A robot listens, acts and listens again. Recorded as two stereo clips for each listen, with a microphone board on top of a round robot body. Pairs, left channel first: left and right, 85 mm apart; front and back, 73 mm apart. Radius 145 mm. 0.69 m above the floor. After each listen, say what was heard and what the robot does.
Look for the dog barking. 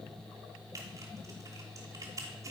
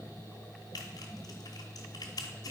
Keep listening.
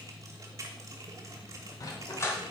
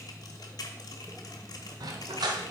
The dog barking: 150° left. Turn 150° left.
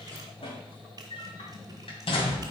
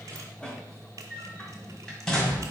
The dog barking is now 85° left. Turn 85° left.
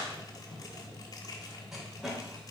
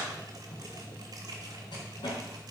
Found it: a dog barking, straight ahead.